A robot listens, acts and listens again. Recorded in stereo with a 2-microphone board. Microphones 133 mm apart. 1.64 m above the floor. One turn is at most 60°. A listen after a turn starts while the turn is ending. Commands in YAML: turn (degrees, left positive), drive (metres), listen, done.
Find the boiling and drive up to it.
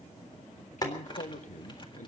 turn: 30
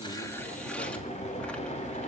turn: 60
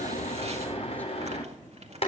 turn: 50
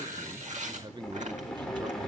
drive: 1.0
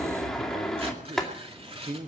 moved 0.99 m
drive: 1.0
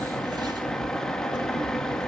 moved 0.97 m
drive: 1.0
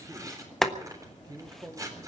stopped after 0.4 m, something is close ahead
done: "I am next to the boiling."